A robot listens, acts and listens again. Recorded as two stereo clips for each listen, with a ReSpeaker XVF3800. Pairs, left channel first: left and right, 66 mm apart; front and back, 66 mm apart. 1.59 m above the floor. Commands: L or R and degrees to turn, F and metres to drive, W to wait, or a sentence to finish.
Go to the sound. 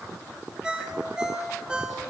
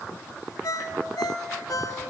R15
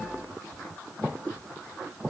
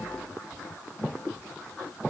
W
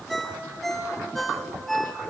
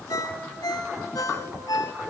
F1.0
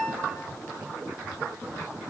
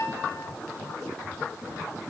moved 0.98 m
F1.0
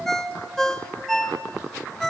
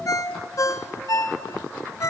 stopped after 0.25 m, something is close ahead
I am next to the ringtone.